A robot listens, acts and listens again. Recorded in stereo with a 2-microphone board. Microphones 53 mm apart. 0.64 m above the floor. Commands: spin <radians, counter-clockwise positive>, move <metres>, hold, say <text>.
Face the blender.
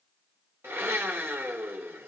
spin -0.87
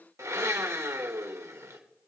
spin -1.40
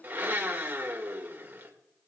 spin -0.61
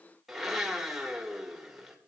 say Facing the blender, 1 to 2 m away.